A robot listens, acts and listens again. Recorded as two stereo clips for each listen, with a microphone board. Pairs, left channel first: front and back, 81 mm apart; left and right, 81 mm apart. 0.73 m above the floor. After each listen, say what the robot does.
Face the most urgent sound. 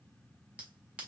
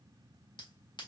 Keep listening.
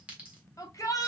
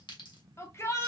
Turn 40° left.
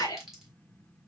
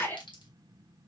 Turn 25° left.
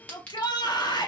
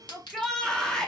Turn 10° left.
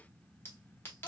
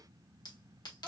Keep listening.
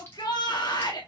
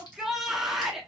Facing the shout.